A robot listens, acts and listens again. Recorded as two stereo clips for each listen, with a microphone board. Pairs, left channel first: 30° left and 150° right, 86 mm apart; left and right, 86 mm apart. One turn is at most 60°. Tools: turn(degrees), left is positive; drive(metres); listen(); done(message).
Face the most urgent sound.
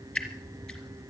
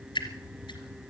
listen()
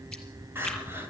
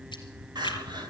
turn(degrees=-60)
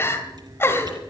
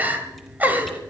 turn(degrees=-25)
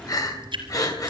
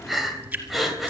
done("Facing the crying, 2 to 4 m away.")